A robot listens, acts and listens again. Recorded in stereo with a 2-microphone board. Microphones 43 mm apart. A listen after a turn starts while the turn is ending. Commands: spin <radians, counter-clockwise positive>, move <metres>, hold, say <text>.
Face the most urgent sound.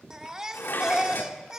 spin -0.26
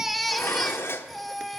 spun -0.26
say Facing the baby crying.